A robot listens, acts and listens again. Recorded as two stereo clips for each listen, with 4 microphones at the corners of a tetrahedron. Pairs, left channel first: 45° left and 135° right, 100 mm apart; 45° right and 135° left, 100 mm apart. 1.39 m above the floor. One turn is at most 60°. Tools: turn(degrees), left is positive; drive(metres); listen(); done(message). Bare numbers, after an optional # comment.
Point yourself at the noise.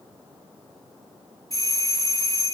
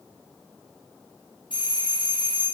# The doorbell: 10° right.
turn(-10)
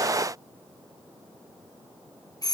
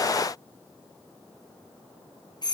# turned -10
done("Found it: a doorbell, straight ahead.")